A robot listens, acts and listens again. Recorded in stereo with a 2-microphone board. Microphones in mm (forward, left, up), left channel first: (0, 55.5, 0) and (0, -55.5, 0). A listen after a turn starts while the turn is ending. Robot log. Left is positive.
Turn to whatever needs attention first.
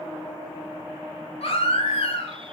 note: The baby crying: about 65° left or 115° left.
cmd yaw +65
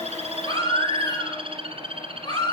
note: So it is at 45° left.
cmd yaw +45
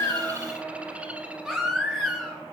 end: Facing the baby crying.